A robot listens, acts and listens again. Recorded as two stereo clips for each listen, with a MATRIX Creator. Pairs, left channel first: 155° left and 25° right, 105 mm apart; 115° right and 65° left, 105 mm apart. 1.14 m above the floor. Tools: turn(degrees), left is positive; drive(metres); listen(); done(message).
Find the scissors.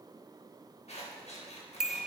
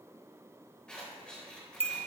turn(degrees=165)
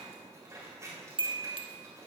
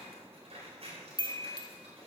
turn(degrees=40)
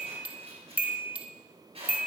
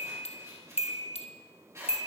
done("Found it: scissors, straight ahead.")